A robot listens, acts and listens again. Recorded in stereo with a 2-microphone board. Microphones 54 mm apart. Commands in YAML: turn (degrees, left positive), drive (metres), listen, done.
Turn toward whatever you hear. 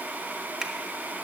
turn: -30
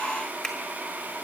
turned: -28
turn: 10
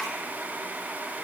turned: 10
listen: true
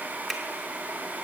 done: "Found it: a finger snap, straight ahead, 1 to 2 m away."